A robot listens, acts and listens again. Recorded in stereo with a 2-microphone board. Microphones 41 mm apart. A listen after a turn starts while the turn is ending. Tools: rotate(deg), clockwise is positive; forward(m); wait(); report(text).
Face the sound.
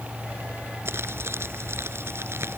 rotate(90)
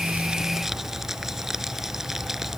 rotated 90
rotate(10)
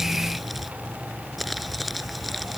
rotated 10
report("Found it: crumpling, straight ahead.")